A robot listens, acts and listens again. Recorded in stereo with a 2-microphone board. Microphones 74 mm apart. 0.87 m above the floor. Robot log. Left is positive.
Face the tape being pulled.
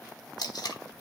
note: The tape being pulled: about 60° left or 120° left.
cmd yaw +60
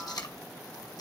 note: So it is at 60° left.
cmd yaw +60
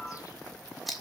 end: Facing the tape being pulled.